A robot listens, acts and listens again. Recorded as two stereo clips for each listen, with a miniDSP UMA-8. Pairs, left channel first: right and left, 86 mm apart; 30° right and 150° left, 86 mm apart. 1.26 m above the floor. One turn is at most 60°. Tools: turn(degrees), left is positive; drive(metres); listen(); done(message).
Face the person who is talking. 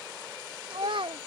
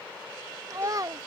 turn(degrees=60)
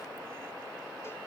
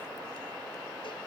turn(degrees=45)
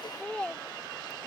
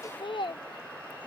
turn(degrees=-15)
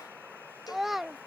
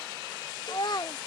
done("Found it: a child speaking, straight ahead.")